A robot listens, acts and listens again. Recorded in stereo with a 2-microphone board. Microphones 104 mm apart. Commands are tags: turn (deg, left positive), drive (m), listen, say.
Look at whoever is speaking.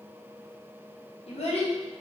<turn deg="70"/>
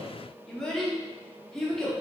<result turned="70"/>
<say>Facing the child speaking, under 1 m away.</say>